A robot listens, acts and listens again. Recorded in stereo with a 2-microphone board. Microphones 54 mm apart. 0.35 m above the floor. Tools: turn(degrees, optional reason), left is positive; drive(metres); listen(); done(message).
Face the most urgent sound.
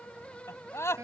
turn(degrees=60, reason="The scream: about 60° left or 120° left.")
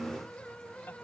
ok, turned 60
listen()
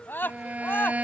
turn(degrees=45, reason="So it is at 45° left.")
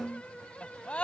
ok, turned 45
turn(degrees=25, reason="The scream is now 25° left.")
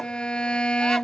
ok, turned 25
listen()
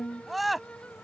done("Facing the scream.")